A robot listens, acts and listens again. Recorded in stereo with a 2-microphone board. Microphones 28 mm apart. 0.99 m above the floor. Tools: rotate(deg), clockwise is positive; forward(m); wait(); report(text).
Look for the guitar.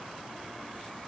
wait()
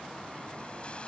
wait()
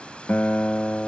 rotate(-90)
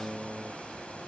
report("Facing the guitar.")